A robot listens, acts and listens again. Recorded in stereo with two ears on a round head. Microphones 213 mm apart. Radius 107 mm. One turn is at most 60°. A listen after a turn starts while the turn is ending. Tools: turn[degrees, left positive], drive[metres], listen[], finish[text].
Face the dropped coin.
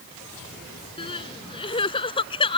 Action: listen[]
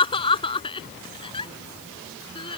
Action: listen[]
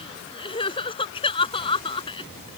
Action: finish[I can't make out a dropped coin, only crying.]